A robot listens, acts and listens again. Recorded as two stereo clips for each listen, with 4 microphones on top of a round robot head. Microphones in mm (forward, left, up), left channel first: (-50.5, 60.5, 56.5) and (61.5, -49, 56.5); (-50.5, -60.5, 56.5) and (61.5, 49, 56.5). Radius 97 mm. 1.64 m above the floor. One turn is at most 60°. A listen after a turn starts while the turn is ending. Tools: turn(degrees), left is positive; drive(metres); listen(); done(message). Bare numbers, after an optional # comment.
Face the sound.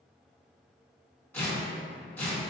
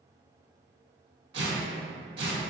# The tearing paper: 60° left.
turn(60)
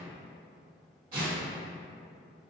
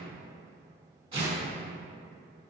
# The tearing paper is now 10° right.
turn(-10)
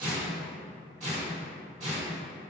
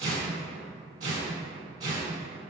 done("Found it: tearing paper, straight ahead, 1 to 2 m away.")